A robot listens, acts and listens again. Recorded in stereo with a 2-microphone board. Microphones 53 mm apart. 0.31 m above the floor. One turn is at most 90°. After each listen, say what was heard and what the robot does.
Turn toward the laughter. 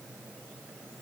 Keep listening.
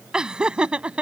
The laughter: about 20° right or 160° right. Turn 20° right.
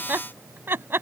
So it is at 135° right. Turn 90° right.
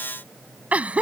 The laughter is now 25° right. Turn 25° right.
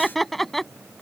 Facing the laughter.